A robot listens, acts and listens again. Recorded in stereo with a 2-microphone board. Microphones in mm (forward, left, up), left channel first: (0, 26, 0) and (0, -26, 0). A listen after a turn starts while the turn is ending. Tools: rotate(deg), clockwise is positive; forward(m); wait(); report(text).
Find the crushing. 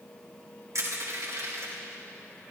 rotate(70)
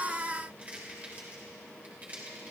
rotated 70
rotate(30)
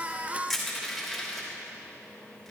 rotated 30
report("Found it: crushing, straight ahead.")